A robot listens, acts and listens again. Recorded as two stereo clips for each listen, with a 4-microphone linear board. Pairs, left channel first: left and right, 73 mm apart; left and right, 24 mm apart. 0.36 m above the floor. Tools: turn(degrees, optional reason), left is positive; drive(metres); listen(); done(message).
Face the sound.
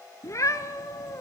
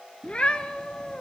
turn(degrees=40, reason="The cat meowing: about 40° left or 140° left.")
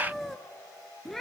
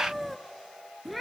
done("Found it: a cat meowing, straight ahead, 1 to 2 m away.")